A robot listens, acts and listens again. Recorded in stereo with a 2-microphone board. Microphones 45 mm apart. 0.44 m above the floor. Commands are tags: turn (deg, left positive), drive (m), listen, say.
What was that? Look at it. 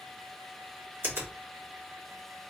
<turn deg="-60"/>
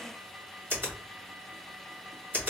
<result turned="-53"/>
<turn deg="-50"/>
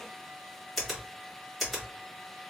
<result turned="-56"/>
<say>Facing the finger snap.</say>